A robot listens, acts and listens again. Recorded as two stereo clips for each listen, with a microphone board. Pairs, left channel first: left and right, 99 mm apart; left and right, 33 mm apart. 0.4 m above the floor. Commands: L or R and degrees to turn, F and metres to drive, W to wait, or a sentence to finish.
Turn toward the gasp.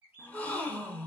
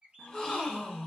L30
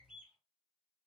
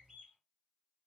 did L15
W
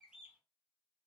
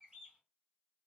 I heard a gasp, but can't make it out now. It was about straight ahead or 150° left.